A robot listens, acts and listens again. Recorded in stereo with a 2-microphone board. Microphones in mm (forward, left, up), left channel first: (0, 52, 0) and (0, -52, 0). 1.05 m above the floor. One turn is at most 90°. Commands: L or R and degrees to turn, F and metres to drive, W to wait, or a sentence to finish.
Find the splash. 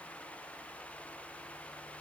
W
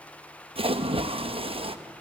R55
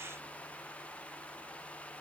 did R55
W
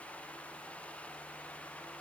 I heard a splash, but can't make it out now. It was about straight ahead or 70° right.